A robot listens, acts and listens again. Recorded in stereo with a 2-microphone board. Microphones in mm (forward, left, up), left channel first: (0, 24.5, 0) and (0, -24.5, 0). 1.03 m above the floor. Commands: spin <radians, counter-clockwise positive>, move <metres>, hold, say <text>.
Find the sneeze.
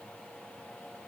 hold
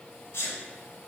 spin 1.05
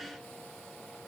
hold
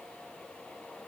say I heard a sneeze, but can't make it out now. It was about straight ahead or 60° left.